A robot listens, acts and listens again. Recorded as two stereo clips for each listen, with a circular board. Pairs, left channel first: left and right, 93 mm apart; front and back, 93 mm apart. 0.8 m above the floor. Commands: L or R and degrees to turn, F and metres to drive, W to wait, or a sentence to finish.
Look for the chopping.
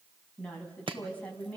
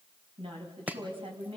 R110
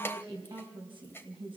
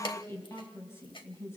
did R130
L25
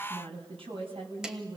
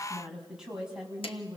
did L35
R10
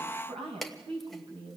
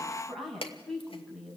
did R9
Found it: chopping, straight ahead, 1 to 2 m away.